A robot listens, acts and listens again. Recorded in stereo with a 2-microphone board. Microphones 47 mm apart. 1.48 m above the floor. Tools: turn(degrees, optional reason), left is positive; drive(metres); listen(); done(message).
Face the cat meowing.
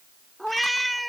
turn(degrees=30)
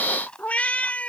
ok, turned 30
turn(degrees=150, reason="So it is at 150° left.")
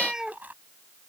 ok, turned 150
turn(degrees=-15, reason="The cat meowing is now 15° right.")
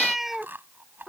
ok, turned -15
done("Found it: a cat meowing, straight ahead.")